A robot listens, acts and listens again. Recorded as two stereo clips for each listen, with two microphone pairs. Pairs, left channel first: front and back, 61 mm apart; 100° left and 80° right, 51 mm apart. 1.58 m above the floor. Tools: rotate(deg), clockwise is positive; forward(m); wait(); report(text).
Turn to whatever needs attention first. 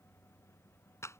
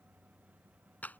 wait()
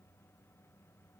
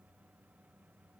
wait()
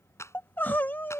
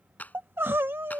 rotate(50)
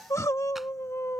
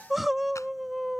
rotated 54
report("Found it: crying, straight ahead.")